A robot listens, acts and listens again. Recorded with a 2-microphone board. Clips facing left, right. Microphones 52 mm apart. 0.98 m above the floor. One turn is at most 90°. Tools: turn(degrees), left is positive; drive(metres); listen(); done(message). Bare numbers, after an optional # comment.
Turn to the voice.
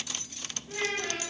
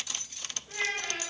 turn(30)
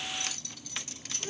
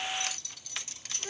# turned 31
# So it is at 25° right.
turn(-25)
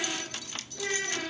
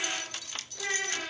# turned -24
done("Found it: a child speaking, straight ahead, 1 to 2 m away.")